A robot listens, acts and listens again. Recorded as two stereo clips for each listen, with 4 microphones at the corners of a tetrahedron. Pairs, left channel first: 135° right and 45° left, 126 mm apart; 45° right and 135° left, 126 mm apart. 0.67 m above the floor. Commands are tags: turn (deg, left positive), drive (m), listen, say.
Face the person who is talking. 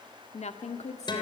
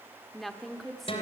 <turn deg="-135"/>
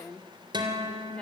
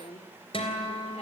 <turn deg="-55"/>
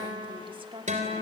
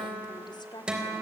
<say>Facing the woman speaking, 1 to 2 m away.</say>